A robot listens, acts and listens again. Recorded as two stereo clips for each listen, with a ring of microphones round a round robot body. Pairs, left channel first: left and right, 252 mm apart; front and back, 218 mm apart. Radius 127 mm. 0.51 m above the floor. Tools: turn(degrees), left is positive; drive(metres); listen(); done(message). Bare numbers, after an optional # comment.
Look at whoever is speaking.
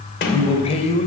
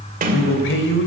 # The man speaking: 25° left.
turn(25)
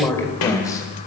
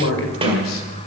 # The man speaking is now 10° left.
turn(10)
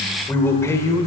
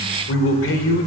# The man speaking is now 15° left.
turn(15)
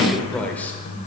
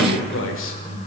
done("Facing the man speaking, 1 to 2 m away.")